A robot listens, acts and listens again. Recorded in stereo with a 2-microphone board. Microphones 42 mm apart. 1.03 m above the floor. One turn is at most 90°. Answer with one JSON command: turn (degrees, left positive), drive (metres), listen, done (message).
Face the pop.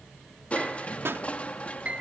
{"turn": -65}
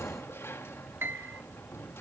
{"listen": true}
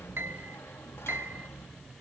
{"done": "I heard a pop, but can't make it out now. It was about straight ahead or 50° right."}